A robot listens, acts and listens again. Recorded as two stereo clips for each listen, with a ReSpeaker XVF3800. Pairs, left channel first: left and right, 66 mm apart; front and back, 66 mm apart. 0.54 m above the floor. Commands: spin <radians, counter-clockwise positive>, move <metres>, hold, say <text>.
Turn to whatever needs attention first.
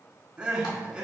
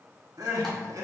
spin -2.79
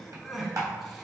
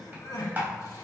say Found it: crying, straight ahead, under 1 m away.